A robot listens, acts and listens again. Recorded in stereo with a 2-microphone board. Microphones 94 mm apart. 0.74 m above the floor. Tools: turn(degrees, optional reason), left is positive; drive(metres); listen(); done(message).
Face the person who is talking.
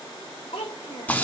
turn(degrees=90)
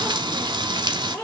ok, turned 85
turn(degrees=15, reason="So it is at 15° left.")
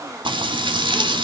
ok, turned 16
listen()
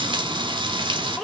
done("Found it: a child speaking, straight ahead, 1 to 2 m away.")